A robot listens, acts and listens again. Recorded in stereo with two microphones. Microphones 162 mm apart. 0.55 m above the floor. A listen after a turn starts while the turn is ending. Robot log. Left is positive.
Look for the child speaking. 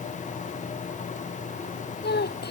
cmd yaw +90
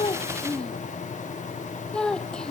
end: Found it: a child speaking, straight ahead.